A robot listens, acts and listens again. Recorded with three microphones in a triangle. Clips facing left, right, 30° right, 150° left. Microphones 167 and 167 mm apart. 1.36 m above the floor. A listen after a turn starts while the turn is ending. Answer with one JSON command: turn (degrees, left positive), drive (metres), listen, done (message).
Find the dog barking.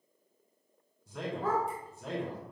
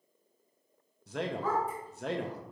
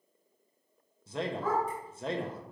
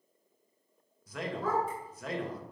{"turn": 115}
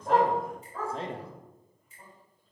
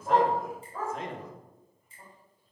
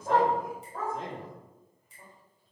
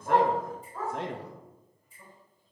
{"turn": -10}
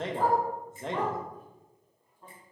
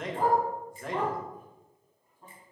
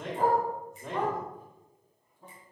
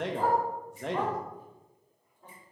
{"done": "Facing the dog barking."}